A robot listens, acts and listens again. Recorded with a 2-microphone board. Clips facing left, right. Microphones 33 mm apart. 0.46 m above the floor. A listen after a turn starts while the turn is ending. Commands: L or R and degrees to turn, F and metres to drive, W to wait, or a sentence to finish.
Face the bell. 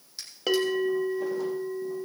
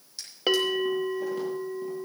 R20
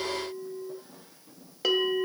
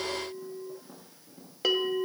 Facing the bell, 1 to 2 m away.